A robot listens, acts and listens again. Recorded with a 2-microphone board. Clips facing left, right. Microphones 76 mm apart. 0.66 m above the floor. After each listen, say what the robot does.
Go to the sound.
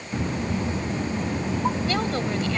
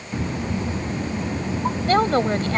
Turn 45° right.
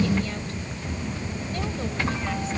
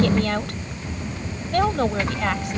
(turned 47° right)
Keep listening.
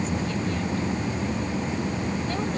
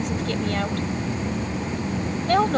Turn 85° right.
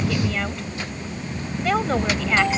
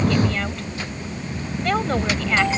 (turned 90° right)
Drive 1.0 m forward.
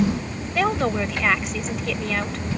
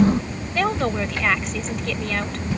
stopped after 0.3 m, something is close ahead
Something is in my way. I am facing the woman speaking but have not reached it.